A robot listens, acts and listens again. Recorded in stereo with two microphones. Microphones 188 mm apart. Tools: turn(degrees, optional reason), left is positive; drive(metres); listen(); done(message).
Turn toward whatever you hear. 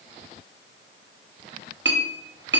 turn(degrees=-65, reason="The clink: about 65° right or 115° right.")
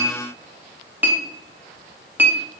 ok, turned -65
turn(degrees=-10, reason="So it is at 10° right.")
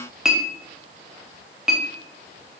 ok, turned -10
done("Found it: a clink, straight ahead, under 1 m away.")